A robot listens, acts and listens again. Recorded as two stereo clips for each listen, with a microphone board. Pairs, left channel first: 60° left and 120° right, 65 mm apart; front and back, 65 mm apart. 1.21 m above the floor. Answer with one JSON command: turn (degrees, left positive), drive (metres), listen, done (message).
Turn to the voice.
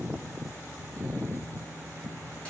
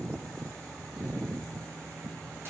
{"listen": true}
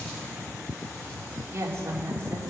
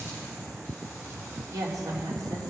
{"turn": -165}
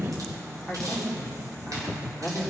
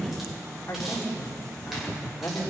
{"turn": -35}
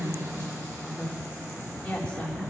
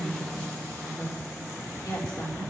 {"turn": -10}
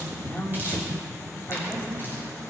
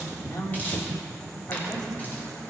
{"done": "Found it: a woman speaking, straight ahead, 2 to 4 m away."}